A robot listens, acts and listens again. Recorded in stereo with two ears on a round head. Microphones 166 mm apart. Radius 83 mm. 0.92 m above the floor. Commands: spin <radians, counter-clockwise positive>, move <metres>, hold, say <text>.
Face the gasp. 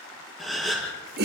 spin 0.52
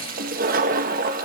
hold
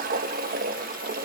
say I heard a gasp, but can't make it out now. It was about 30° right or 150° left.